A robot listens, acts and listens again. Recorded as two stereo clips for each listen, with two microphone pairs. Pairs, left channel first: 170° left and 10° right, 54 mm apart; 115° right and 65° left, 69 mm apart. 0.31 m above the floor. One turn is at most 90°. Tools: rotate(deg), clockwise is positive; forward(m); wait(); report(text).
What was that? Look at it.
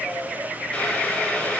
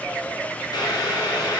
rotate(90)
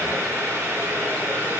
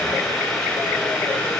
rotate(30)
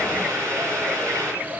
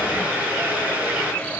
report("Facing the boiling.")